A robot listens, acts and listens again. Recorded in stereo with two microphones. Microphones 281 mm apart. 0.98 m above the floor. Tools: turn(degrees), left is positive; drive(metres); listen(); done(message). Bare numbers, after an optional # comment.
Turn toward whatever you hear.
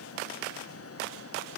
listen()
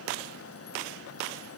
listen()
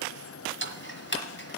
# The ticking: about 40° left or 140° left.
turn(40)
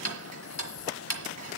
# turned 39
# So it is at 90° left.
turn(90)
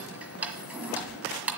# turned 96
done("Facing the ticking.")